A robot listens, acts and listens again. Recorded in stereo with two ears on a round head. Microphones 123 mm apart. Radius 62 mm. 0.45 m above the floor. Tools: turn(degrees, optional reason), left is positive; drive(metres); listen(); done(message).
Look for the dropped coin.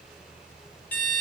listen()
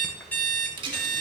turn(degrees=-40, reason="The dropped coin: about 40° right or 140° right.")
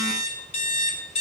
listen()
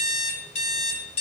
done("I heard a dropped coin, but can't make it out now. It was about straight ahead or 100° right.")